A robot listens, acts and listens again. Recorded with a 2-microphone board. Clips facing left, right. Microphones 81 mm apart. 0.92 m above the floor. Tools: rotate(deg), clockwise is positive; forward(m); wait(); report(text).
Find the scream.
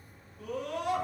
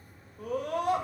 rotate(45)
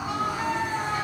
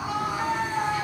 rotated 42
report("Found it: a scream, straight ahead, 1 to 2 m away.")